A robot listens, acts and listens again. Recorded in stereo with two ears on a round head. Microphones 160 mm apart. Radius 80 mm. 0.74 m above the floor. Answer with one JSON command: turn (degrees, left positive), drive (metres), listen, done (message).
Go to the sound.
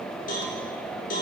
{"turn": 45}
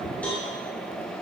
{"turn": 10}
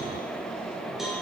{"drive": 1.0}
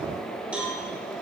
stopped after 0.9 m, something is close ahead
{"turn": -10}
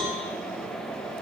{"done": "I am next to the cowbell."}